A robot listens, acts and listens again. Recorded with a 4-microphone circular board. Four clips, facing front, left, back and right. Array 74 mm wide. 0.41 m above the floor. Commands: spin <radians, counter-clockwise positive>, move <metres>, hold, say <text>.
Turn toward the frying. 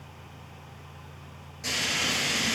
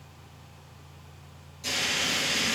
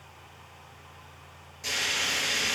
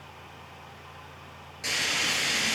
spin -1.66
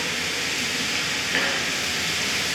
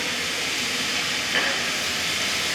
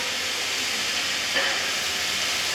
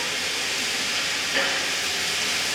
spin 0.52
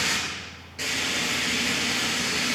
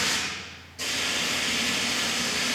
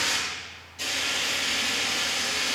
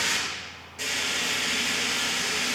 spin -0.26
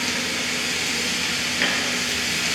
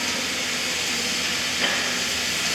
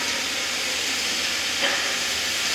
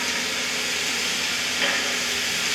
say Found it: frying, straight ahead, 2 to 4 m away.